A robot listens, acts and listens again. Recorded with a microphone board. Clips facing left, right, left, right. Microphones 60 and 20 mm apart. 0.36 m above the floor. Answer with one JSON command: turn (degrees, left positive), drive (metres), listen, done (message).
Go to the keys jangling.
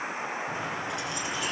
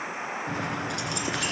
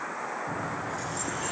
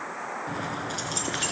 {"turn": -70}
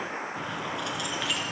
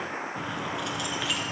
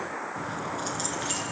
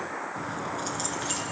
{"drive": 1.0}
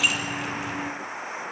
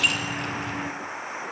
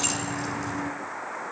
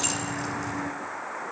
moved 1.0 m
{"drive": 1.0}
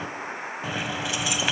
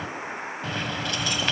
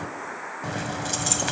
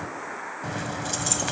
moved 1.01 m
{"turn": 10}
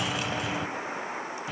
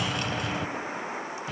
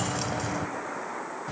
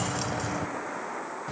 {"drive": 1.0}
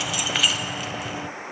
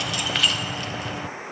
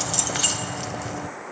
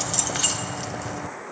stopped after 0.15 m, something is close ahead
{"done": "Arrived at the keys jangling, straight ahead."}